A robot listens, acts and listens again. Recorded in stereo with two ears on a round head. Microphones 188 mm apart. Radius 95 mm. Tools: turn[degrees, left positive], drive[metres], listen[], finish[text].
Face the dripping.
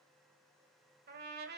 Action: listen[]
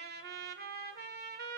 Action: listen[]
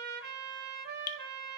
Thought: The dripping: about 40° left or 140° left.
Action: turn[40]
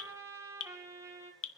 Thought: So it is at 90° left.
Action: turn[90]
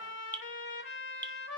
Thought: The dripping is now 10° left.
Action: turn[10]
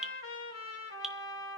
Action: finish[Facing the dripping.]